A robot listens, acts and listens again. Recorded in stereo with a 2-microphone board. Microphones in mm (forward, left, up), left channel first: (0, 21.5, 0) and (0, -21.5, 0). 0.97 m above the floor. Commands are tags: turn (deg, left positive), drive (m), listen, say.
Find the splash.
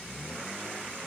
<listen/>
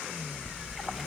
<turn deg="-30"/>
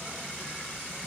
<listen/>
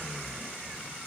<say>I heard a splash, but can't make it out now. It was about 25° left or 145° right.</say>